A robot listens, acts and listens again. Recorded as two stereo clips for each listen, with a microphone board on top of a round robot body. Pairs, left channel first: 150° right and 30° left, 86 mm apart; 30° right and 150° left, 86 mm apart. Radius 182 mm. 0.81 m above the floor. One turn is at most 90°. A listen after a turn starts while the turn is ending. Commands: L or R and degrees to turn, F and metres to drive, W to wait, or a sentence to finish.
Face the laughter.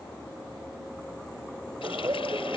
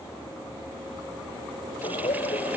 R25
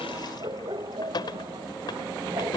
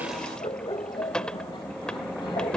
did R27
Found it: laughter, straight ahead.